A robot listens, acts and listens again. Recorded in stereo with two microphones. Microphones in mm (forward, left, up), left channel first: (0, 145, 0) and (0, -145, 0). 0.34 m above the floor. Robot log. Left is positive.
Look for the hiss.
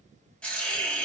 cmd yaw +30
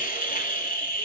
note: So it is at 145° left.
cmd yaw +145
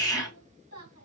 note: The hiss is now 15° left.
cmd yaw +15
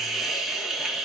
end: Facing the hiss.